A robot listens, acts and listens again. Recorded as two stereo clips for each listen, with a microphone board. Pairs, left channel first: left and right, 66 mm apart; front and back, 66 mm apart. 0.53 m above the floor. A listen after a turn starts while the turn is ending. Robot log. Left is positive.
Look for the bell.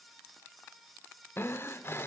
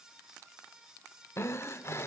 cmd idle
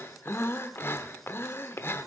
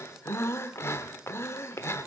cmd idle
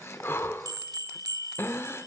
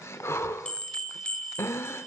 note: The bell: 75° right.
cmd yaw -75
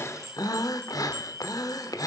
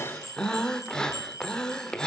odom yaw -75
note: The bell is now 40° right.
cmd yaw -40
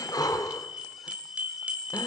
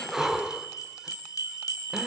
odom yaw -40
note: The bell is now 20° right.
cmd yaw -20
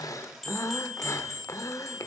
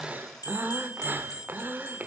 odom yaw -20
end: Found it: a bell, straight ahead, 1 to 2 m away.